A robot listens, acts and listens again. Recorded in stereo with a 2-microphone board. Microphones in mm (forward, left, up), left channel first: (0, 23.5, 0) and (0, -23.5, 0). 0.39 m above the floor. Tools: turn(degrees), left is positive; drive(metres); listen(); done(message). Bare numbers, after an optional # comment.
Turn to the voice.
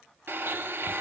listen()
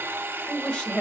# The woman speaking: about 20° left or 160° left.
turn(20)
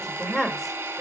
turn(30)
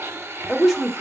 done("Found it: a woman speaking, straight ahead, 1 to 2 m away.")